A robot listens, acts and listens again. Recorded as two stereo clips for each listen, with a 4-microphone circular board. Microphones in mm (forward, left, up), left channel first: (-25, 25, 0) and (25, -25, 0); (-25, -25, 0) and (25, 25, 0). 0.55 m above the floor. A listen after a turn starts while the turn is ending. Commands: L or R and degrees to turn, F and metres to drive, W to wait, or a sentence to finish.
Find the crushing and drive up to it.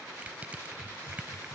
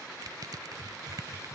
L25
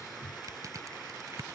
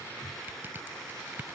R15
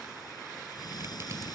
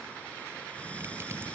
W
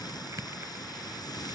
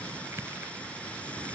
F1.0
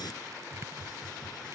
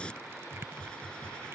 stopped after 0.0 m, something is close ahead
Something is in my way. I am facing the crushing but have not reached it.